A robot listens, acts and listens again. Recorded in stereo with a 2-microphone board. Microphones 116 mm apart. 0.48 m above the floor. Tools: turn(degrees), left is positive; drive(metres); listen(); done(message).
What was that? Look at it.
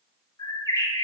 turn(degrees=35)
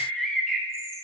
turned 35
done("Facing the bird, under 1 m away.")